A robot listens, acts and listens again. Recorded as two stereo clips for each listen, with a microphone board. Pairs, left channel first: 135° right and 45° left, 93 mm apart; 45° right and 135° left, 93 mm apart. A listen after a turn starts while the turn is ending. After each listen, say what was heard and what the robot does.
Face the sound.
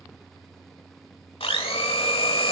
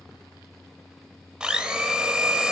The blender: 145° right. Turn 145° right.
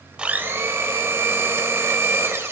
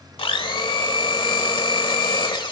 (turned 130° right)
The blender is now 15° right. Turn 15° right.
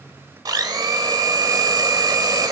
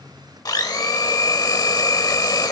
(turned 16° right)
Found it: a blender, straight ahead, 1 to 2 m away.